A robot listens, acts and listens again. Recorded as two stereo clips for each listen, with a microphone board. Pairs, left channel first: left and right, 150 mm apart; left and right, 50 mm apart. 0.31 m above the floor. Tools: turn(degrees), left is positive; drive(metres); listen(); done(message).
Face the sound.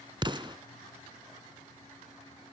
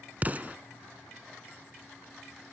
turn(degrees=-30)
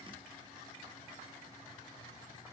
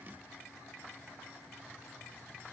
listen()
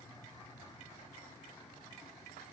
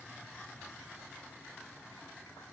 done("I heard an explosion, but can't make it out now. It was about straight ahead or 120° right.")